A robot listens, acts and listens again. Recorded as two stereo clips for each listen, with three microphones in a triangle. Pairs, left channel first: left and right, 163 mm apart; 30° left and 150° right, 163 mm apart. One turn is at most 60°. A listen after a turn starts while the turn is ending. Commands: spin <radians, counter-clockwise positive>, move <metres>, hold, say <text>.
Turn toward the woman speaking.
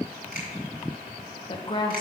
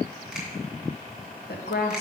spin 0.52
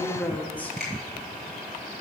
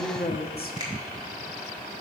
spin 0.17
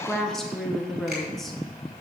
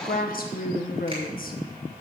say Found it: a woman speaking, straight ahead, 1 to 2 m away.